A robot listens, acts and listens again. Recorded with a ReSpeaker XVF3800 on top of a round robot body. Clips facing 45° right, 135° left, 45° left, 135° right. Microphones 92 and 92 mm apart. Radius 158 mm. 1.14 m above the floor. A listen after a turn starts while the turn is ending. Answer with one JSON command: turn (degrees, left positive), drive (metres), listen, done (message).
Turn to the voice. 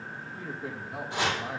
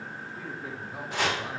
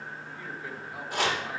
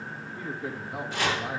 {"turn": -70}
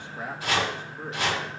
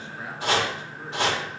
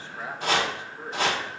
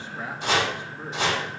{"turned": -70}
{"listen": true}
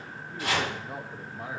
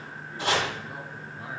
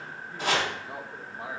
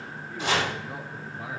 {"turn": -10}
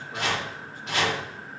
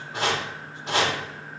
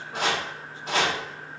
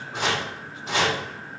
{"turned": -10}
{"listen": true}
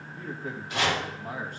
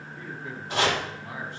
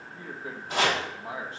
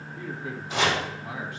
{"turn": -10}
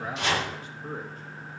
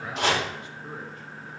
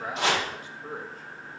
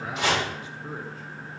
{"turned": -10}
{"done": "Facing the man speaking."}